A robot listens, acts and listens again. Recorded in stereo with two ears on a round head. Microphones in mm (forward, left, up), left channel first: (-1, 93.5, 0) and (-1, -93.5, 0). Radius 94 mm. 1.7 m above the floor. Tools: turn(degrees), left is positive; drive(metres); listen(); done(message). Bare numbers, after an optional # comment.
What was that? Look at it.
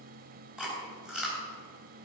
turn(-30)
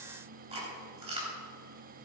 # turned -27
# So it is at 150° right.
turn(-150)
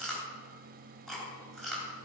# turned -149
done("Found it: chewing, straight ahead, 2 to 4 m away.")